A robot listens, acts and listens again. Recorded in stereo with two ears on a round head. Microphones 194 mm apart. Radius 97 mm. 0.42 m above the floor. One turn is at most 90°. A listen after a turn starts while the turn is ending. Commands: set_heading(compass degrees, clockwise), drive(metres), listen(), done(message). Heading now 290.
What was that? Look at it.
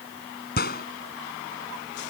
set_heading(245)
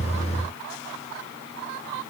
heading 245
listen()
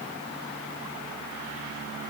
done("I heard a gunshot, but can't make it out now. It was about straight ahead or 90° left.")